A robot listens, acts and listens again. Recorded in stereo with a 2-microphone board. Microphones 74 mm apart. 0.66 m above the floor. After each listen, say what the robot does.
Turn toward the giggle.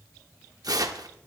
Keep listening.
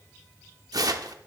Keep listening.
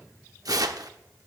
I can't make out a giggle, only tearing paper.